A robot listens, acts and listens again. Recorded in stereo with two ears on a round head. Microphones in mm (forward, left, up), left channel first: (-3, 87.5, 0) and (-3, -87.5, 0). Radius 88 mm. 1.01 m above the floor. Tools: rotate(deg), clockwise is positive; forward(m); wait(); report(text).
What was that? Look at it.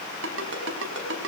rotate(65)
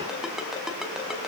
report("Facing the ringtone, over 4 m away.")